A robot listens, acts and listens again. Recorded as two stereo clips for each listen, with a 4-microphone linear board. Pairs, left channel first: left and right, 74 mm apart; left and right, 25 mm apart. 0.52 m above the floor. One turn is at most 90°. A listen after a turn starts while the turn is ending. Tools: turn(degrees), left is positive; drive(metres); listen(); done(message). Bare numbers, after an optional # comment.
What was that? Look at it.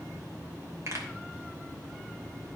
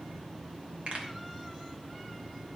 # The pop: about 40° right or 140° right.
turn(-40)
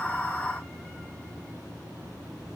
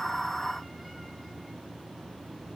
listen()
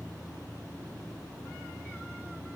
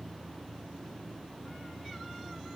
done("I heard a pop, but can't make it out now. It was about straight ahead or 100° right.")